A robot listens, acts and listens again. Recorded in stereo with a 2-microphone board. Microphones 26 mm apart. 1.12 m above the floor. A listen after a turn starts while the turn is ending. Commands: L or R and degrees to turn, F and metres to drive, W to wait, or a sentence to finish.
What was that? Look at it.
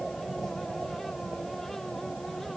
W
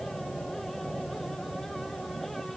W
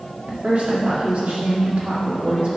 R55
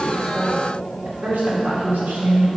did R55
R75
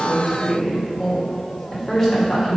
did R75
L10
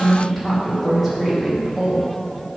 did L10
Facing the woman speaking, 2 to 4 m away.